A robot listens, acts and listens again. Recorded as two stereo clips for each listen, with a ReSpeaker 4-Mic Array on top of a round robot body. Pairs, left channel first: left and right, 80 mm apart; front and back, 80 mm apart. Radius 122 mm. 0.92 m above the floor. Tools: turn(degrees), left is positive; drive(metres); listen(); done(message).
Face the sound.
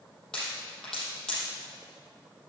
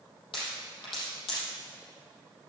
turn(degrees=10)
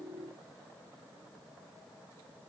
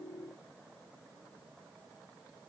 done("Facing where the pop came from. I can't hear it now.")